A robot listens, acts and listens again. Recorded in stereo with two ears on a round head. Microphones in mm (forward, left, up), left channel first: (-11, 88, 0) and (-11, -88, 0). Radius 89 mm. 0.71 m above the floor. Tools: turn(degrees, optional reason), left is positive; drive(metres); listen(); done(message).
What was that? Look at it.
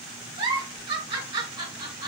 turn(degrees=-25, reason="The giggle: about 25° right or 155° right.")
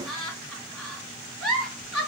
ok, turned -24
done("Found it: a giggle, straight ahead.")